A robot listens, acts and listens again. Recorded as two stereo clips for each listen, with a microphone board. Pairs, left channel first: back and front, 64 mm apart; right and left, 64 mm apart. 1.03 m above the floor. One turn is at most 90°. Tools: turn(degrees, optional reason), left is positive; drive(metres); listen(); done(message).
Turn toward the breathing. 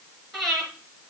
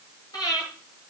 turn(degrees=-90, reason="The breathing: 95° right.")
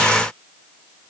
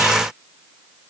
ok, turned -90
listen()
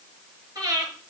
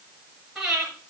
done("Facing the breathing, over 4 m away.")